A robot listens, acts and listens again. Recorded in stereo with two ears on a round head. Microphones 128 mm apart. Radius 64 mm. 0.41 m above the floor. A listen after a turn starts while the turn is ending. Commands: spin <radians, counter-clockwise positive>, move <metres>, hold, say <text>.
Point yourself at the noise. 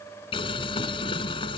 spin 0.61
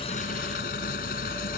spin 1.92
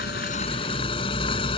spin 0.70
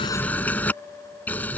spin 0.17
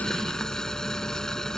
say Found it: boiling, straight ahead.